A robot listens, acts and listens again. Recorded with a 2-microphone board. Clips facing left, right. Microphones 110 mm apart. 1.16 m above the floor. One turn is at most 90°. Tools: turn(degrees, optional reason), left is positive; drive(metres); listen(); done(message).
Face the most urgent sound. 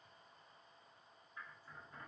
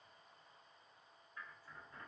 listen()
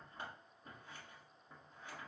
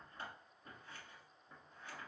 listen()
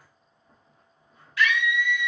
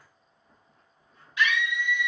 turn(degrees=-20, reason="The scream: about 20° right or 160° right.")
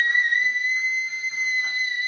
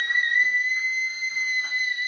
done("Found it: a scream, straight ahead.")